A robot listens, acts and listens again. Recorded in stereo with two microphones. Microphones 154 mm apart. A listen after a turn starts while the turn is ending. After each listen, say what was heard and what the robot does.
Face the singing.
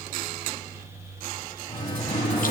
The singing: about 35° left or 145° left. Turn 35° left.
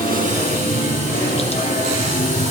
So it is at 110° left. Turn 110° left.
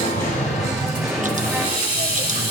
Found it: singing, straight ahead.